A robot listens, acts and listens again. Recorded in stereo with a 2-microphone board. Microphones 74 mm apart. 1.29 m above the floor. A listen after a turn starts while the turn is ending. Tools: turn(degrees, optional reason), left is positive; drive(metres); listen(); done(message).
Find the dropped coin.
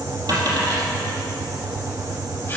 turn(degrees=-65, reason="The dropped coin: about 65° right or 115° right.")
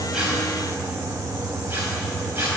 listen()
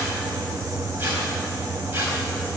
done("I heard a dropped coin, but can't make it out now. It was about straight ahead or 50° right.")